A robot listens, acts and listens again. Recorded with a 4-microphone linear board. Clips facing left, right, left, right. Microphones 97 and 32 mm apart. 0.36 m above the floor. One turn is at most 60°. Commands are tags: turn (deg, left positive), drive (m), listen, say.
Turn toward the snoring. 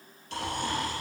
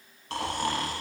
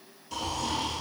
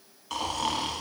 <turn deg="-60"/>
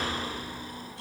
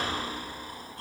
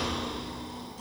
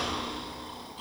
<turn deg="-45"/>
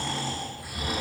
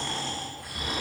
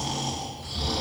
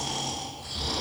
<say>Facing the snoring.</say>